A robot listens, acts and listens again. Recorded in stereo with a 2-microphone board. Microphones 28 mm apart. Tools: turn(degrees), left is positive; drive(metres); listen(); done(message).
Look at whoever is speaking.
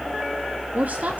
turn(degrees=-70)
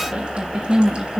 turn(degrees=-30)
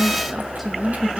done("Found it: a woman speaking, straight ahead.")